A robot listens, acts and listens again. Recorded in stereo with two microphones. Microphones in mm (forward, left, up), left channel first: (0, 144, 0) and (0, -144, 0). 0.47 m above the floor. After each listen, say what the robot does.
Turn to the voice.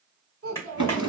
Turn 50° right.
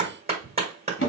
Keep listening.
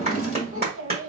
Turn 65° right.
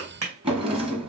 Keep listening.
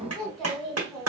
Found it: a child speaking, straight ahead, 1 to 2 m away.